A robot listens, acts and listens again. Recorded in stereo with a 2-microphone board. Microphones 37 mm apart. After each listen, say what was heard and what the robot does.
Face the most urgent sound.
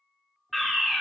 Turn 30° left.
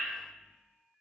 Keep listening.
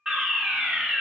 So it is at 30° right. Turn 30° right.
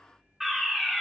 Found it: a fire alarm, straight ahead, 2 to 4 m away.